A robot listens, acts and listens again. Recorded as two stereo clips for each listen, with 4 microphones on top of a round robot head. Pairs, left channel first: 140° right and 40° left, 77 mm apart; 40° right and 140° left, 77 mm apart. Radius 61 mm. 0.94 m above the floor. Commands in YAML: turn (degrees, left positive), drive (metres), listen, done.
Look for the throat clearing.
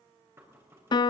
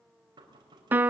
listen: true
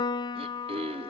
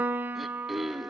turn: 50
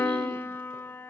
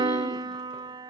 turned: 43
turn: 10
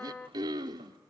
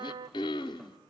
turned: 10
done: "Found it: throat clearing, straight ahead, under 1 m away."